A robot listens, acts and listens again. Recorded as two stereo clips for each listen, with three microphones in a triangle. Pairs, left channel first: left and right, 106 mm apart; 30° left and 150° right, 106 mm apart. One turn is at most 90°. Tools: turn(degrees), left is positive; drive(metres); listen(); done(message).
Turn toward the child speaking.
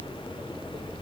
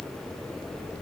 listen()
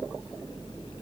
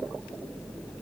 listen()
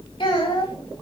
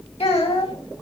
turn(degrees=50)
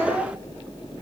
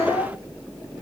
listen()
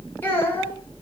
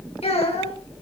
turn(degrees=20)
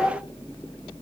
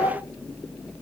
listen()
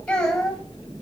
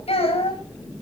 turn(degrees=10)
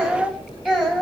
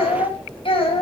done("Found it: a child speaking, straight ahead.")